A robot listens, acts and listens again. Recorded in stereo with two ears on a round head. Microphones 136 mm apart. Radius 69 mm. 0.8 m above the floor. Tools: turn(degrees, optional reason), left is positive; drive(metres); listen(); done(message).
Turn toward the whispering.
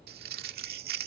listen()
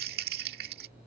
listen()
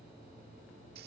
done("I can't make out whispering to turn to.")